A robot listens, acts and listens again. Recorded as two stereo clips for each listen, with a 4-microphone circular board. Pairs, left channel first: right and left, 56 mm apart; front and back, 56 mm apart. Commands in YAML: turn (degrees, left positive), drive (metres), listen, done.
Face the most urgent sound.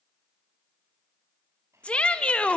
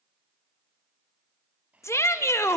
turn: -20
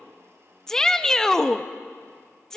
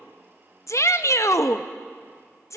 turn: -10
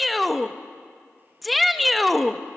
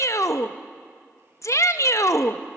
done: "Facing the shout, under 1 m away."